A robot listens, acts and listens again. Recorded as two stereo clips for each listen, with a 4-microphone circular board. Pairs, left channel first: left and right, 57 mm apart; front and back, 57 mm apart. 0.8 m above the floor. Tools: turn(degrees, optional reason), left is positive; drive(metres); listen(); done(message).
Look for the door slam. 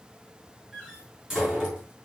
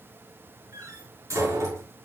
turn(degrees=-170, reason="The door slam: 170° right.")
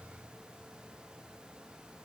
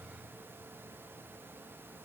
done("I heard a door slam from this way, but can't make it out now.")